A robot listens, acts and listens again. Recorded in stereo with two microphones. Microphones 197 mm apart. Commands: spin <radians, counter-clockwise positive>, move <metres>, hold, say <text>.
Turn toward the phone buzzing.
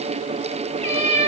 hold
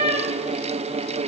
hold
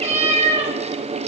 say I can't make out a phone buzzing to turn to.